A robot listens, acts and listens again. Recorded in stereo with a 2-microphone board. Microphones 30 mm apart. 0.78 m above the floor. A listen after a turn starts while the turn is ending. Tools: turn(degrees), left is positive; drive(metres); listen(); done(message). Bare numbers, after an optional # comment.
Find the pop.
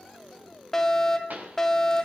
# The pop: about 75° right or 105° right.
turn(-75)
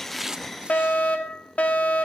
listen()
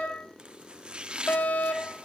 done("I heard a pop, but can't make it out now. It was about straight ahead or 30° right.")